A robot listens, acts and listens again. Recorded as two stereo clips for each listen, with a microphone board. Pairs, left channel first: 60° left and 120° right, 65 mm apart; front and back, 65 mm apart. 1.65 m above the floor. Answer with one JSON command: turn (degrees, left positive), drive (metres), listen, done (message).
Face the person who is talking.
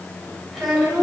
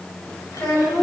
{"turn": -30}
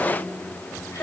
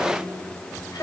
{"turn": 20}
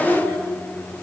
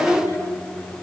{"done": "Found it: a child speaking, straight ahead, over 4 m away."}